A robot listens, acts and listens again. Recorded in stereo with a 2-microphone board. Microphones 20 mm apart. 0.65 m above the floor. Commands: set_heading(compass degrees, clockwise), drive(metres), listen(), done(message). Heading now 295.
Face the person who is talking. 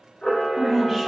set_heading(265)
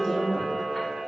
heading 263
set_heading(128)
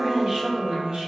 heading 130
set_heading(190)
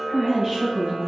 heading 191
set_heading(206)
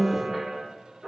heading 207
done("Found it: a woman speaking, straight ahead.")